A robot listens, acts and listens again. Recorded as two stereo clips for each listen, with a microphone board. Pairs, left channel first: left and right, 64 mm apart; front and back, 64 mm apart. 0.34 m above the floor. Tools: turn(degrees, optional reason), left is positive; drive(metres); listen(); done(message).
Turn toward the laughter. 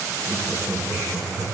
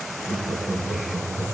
turn(degrees=-45, reason="The laughter: 45° right.")
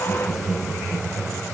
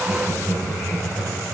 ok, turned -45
turn(degrees=20, reason="The laughter is now 20° left.")
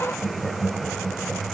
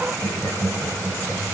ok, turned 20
turn(degrees=30, reason="The laughter is now 30° left.")
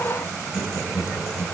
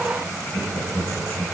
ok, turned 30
turn(degrees=45, reason="The laughter is now 45° left.")
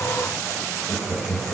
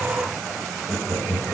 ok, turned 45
turn(degrees=25, reason="The laughter is now 25° left.")
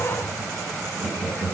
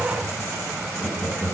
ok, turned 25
turn(degrees=-20, reason="The laughter is now 20° right.")
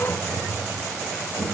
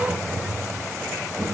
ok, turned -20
done("Facing the laughter.")